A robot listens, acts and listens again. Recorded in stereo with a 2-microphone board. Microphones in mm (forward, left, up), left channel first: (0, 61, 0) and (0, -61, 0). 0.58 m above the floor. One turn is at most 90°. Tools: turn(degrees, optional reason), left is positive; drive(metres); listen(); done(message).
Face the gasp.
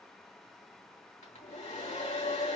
listen()
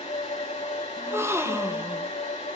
turn(degrees=-20, reason="The gasp: about 20° right or 160° right.")
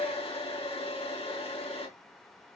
listen()
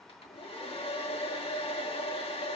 done("I heard a gasp, but can't make it out now. It was about straight ahead or 140° right.")